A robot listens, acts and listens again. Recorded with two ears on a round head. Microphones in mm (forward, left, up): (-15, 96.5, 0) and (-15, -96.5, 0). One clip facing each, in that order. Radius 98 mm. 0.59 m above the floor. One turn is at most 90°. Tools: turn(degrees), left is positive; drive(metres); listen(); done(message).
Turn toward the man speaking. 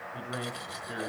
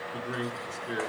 turn(degrees=-40)
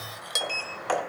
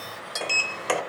listen()
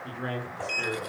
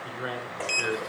done("Facing the man speaking.")